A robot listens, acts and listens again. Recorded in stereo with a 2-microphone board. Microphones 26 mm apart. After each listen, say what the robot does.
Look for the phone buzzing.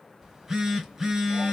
Turn 15° right.
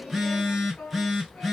Found it: a phone buzzing, straight ahead.